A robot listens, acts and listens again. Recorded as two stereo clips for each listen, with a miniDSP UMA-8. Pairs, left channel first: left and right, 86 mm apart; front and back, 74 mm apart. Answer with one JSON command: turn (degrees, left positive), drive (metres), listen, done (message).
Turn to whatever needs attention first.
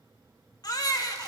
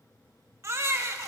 {"turn": 130}
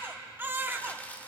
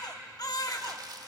{"turn": -25}
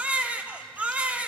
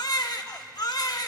{"turn": -15}
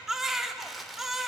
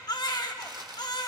{"done": "Facing the baby crying, 1 to 2 m away."}